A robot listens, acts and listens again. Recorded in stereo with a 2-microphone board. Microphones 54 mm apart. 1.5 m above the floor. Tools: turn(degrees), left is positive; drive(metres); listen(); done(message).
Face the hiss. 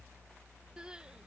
listen()
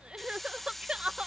turn(degrees=30)
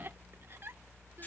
listen()
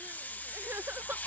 turn(degrees=150)
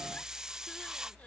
turn(degrees=-10)
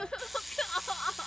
done("Facing the hiss.")